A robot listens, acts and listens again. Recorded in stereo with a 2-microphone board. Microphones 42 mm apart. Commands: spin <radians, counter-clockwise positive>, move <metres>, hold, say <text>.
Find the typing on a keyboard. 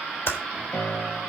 spin 1.22
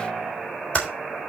spin 0.52
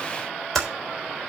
say Found it: typing on a keyboard, straight ahead, 2 to 4 m away.